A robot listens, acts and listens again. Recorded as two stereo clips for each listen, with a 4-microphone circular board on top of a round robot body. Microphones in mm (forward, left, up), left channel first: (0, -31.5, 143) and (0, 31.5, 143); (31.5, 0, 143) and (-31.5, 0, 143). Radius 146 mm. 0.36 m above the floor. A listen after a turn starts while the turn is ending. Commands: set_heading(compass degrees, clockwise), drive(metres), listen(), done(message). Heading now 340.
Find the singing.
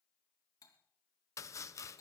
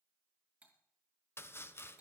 listen()
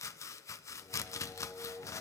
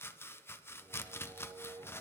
set_heading(145)
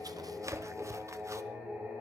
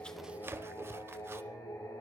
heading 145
set_heading(115)
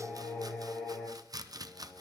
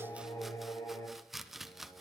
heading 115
done("Facing the singing, over 4 m away.")